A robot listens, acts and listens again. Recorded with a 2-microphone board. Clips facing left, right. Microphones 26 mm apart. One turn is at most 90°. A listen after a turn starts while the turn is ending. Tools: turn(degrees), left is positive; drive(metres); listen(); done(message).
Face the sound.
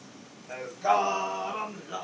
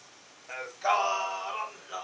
turn(degrees=30)
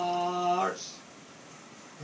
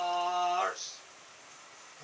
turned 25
turn(degrees=30)
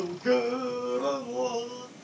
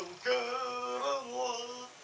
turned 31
turn(degrees=30)
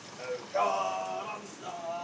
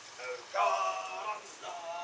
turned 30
turn(degrees=-25)
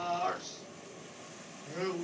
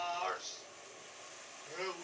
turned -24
done("Found it: singing, straight ahead, 2 to 4 m away.")